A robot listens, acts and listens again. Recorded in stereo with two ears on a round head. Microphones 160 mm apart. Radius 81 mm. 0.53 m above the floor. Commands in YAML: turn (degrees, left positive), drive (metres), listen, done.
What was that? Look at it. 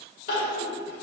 turn: 50
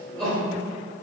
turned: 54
done: "Found it: crying, straight ahead, 1 to 2 m away."